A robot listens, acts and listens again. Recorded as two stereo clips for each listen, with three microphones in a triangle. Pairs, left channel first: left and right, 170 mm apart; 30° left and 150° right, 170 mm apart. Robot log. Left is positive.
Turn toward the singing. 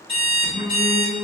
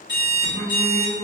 note: The singing: 75° right.
cmd yaw -75
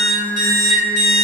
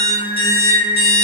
note: The singing is now 30° left.
cmd yaw +30
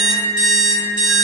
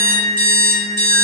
note: The singing is now 15° left.
cmd yaw +15
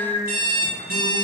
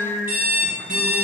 note: The singing is now 10° left.
cmd yaw +10
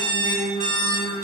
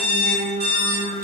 end: Facing the singing, 2 to 4 m away.